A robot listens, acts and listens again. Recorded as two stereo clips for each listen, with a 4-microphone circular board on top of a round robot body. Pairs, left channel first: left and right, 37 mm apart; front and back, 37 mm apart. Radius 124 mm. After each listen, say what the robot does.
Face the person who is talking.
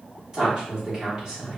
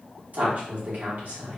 Turn 155° right.
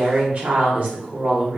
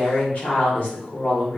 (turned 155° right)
Turn 50° right.
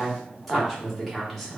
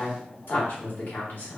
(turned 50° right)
Facing the woman speaking, 1 to 2 m away.